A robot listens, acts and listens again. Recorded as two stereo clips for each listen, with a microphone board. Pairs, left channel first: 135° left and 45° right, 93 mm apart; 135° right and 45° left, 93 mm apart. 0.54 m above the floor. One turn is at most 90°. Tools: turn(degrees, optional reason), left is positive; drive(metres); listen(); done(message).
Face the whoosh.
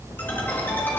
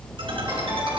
listen()
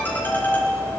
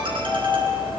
listen()
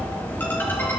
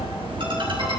done("I can't make out a whoosh to turn to.")